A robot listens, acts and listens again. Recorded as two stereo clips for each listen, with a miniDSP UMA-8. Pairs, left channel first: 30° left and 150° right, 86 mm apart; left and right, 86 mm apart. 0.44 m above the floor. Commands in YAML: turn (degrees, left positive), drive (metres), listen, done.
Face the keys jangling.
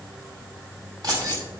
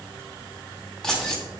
turn: 175
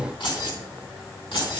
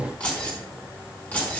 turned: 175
turn: 20
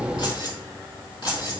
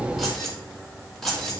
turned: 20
done: "Found it: keys jangling, straight ahead."